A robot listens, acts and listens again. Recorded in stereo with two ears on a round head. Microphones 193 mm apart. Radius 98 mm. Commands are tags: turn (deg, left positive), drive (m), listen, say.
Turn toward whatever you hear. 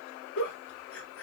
<turn deg="65"/>
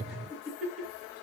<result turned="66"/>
<say>Facing the giggle, 2 to 4 m away.</say>